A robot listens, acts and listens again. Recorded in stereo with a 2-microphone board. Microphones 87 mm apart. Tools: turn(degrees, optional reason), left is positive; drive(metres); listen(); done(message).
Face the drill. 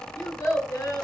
listen()
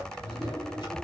listen()
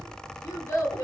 done("I can't make out a drill to turn to.")